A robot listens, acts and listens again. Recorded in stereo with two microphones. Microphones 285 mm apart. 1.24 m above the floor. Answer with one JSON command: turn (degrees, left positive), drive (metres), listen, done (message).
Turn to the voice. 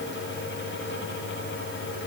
{"listen": true}
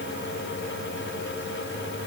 {"listen": true}
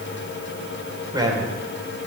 {"turn": -30}
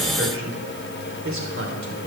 {"turn": -135}
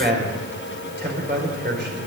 {"turn": -40}
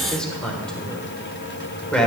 {"done": "Found it: a man speaking, straight ahead."}